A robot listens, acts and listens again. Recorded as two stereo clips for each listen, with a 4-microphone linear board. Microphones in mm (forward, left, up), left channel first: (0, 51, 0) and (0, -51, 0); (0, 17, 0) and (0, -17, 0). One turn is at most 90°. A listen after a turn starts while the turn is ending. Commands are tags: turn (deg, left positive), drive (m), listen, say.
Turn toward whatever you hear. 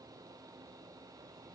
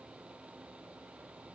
<listen/>
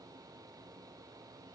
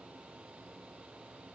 <listen/>
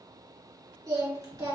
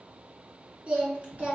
<turn deg="-35"/>
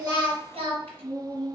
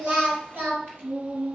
<turn deg="-90"/>
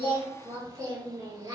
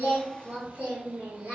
<turn deg="-35"/>
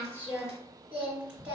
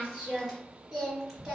<turn deg="-10"/>
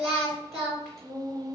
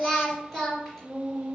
<say>Facing the singing.</say>